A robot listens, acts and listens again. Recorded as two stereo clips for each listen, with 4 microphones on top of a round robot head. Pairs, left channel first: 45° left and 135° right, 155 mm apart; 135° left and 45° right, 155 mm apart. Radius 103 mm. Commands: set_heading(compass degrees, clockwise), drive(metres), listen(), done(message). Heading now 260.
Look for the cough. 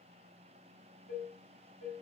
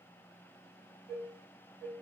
listen()
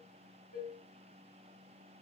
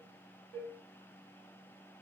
listen()
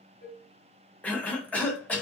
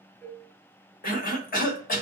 set_heading(135)
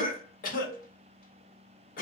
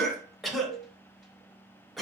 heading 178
set_heading(133)
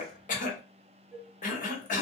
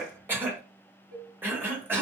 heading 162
set_heading(132)
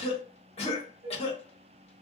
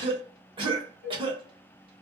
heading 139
done("Found it: a cough, straight ahead.")